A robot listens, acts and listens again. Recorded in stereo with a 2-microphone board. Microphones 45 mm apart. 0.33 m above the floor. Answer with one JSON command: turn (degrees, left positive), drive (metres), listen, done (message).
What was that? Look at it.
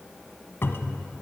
{"turn": 65}
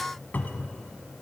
{"turn": 45}
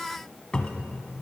{"turn": 25}
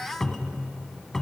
{"turn": 10}
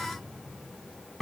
{"done": "Facing the cupboard door."}